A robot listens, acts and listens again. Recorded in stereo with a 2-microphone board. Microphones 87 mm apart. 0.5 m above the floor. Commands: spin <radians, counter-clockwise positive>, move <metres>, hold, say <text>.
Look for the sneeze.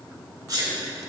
spin -0.70
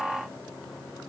hold
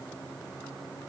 say I heard a sneeze, but can't make it out now. It was about straight ahead or 100° right.